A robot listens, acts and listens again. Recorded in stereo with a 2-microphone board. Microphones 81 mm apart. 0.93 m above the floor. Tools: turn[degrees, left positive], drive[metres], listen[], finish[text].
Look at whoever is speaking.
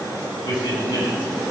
Action: turn[90]
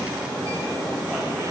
Action: listen[]
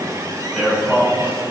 Action: finish[Found it: a man speaking, straight ahead.]